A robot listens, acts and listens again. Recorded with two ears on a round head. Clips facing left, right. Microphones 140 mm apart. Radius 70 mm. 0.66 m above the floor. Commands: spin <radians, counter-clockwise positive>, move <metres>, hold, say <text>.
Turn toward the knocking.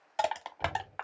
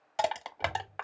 spin 0.96
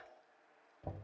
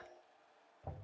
spin 0.87
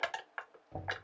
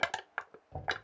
spin 0.26
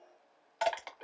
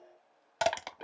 hold
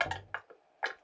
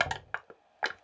say Found it: knocking, straight ahead, under 1 m away.